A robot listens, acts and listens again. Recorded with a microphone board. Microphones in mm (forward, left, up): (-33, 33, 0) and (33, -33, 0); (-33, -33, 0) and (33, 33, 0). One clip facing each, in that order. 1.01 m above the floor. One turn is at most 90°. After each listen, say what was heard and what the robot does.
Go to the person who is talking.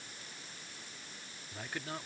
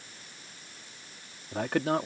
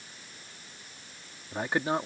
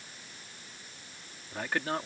The man speaking: 65° right. Turn 65° right.
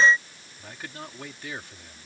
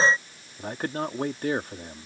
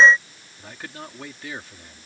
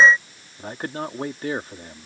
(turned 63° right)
Drive 1.0 m forward.
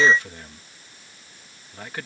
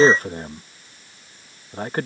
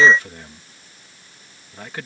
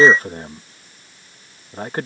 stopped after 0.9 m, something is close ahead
I am next to the man speaking.